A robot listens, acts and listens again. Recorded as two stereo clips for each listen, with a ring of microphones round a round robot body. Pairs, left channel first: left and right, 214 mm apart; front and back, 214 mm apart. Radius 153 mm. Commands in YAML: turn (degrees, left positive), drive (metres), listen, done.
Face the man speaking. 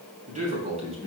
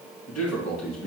turn: -25
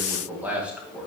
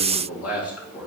done: "Facing the man speaking."